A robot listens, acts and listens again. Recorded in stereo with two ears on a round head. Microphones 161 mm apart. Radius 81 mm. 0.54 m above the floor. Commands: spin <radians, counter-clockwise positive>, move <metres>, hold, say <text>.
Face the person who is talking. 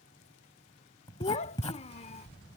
spin 0.61
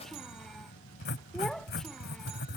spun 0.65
say Found it: a child speaking, straight ahead.